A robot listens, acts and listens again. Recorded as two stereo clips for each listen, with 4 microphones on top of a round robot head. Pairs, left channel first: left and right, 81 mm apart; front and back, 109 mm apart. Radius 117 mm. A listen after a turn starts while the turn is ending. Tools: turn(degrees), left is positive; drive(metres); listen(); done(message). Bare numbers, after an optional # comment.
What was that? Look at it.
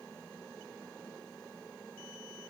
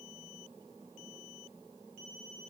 listen()
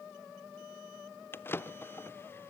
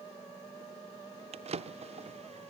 # The drawer: 155° left.
turn(155)
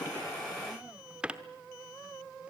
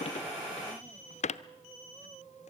# The drawer is now 10° right.
turn(-10)
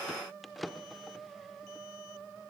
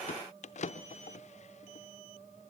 done("Found it: a drawer, straight ahead.")